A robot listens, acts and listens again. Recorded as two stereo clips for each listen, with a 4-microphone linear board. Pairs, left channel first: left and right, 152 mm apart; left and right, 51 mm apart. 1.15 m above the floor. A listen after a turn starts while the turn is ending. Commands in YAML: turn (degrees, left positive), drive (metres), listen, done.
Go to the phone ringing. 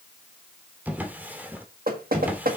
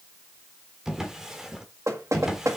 listen: true
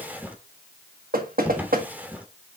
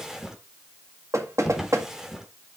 listen: true
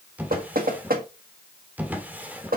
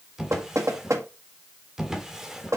done: "I can't make out a phone ringing to turn to."